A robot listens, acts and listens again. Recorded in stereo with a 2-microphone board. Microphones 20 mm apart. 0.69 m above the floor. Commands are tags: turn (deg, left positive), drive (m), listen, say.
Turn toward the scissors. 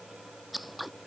<turn deg="30"/>
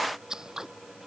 <turn deg="-30"/>
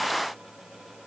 <listen/>
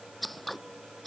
<say>Found it: scissors, straight ahead.</say>